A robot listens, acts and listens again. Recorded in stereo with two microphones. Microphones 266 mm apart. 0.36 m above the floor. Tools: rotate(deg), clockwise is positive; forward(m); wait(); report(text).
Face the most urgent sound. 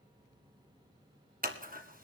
wait()
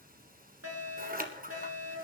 rotate(65)
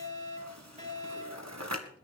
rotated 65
rotate(30)
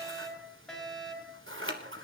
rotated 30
report("Found it: a fire alarm, straight ahead.")